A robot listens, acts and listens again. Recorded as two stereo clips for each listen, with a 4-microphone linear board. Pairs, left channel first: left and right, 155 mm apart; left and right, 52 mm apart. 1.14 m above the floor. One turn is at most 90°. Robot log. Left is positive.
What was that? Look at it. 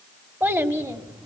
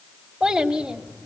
note: The child speaking: about 20° right or 160° right.
cmd yaw -20
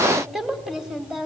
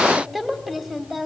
cmd yaw -30
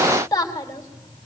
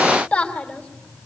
note: So it is at 25° left.
cmd yaw +25
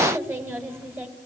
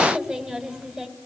note: The child speaking is now 15° right.
cmd yaw -15
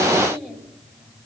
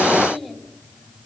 end: Facing the child speaking.